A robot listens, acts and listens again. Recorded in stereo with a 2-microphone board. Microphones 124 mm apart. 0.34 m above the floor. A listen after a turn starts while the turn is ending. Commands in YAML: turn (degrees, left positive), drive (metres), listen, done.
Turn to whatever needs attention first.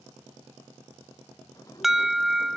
turn: -30
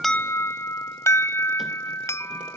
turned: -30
turn: 25
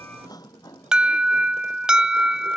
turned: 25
done: "Found it: an alarm, straight ahead."